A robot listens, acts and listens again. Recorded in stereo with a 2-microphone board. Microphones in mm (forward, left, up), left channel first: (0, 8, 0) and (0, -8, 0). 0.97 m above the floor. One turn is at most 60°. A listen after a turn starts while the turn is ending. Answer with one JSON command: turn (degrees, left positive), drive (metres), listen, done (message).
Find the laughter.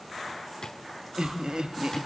{"turn": -60}
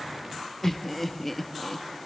{"turn": 15}
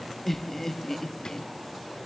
{"turn": 20}
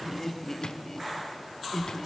{"turn": 25}
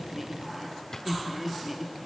{"turn": -15}
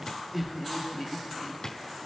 {"done": "Found it: laughter, straight ahead, 1 to 2 m away."}